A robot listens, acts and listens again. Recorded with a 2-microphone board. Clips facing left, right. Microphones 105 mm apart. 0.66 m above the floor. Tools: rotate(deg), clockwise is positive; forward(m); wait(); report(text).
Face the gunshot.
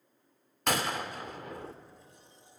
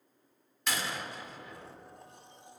rotate(-55)
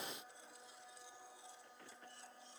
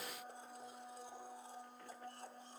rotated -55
wait()
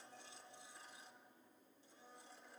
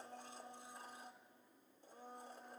report("I heard a gunshot, but can't make it out now. It was about straight ahead or 70° left.")